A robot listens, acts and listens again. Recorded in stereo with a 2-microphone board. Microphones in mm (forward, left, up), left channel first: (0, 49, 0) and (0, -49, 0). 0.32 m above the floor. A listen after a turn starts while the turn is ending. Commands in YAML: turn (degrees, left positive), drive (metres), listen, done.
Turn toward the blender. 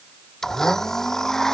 turn: 30
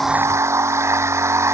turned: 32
turn: -25
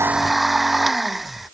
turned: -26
done: "Found it: a blender, straight ahead."